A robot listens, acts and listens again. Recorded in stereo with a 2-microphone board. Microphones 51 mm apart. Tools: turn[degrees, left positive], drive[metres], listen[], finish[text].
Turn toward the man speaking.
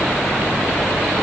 Action: listen[]
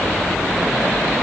Action: listen[]
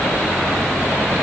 Action: finish[I can't make out a man speaking to turn to.]